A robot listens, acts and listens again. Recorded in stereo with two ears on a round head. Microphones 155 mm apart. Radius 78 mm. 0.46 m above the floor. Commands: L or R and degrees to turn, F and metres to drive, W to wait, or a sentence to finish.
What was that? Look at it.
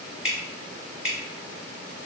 R30
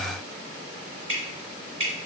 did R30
R145
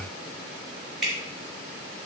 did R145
Found it: dripping, straight ahead.